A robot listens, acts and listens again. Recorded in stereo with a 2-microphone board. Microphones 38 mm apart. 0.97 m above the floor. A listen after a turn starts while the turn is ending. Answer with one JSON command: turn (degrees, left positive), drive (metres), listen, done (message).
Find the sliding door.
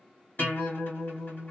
{"listen": true}
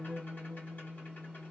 {"listen": true}
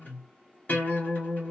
{"done": "I can't make out a sliding door, only a guitar."}